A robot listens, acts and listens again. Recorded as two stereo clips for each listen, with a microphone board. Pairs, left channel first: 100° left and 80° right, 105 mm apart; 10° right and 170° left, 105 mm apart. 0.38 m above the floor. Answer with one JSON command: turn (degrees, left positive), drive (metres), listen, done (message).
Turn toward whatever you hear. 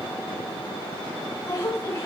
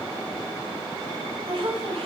{"turn": 155}
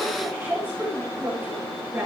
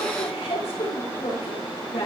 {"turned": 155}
{"turn": -10}
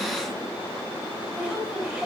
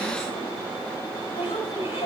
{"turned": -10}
{"done": "Facing the woman speaking, over 4 m away."}